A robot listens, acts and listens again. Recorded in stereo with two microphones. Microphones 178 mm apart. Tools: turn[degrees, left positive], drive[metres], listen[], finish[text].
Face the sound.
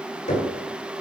Thought: The knocking: about 45° left or 135° left.
Action: turn[45]
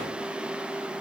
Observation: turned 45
Action: listen[]
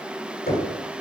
Thought: So it is at 80° left.
Action: turn[80]
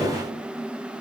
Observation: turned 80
Action: finish[Found it: knocking, straight ahead, 1 to 2 m away.]